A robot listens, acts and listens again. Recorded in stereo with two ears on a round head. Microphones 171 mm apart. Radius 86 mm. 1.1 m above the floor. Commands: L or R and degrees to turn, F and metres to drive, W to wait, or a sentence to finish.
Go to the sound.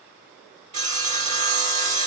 R35
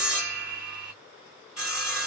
F1.0
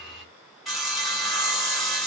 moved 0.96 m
F1.0
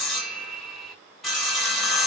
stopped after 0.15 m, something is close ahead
I am next to the sawing.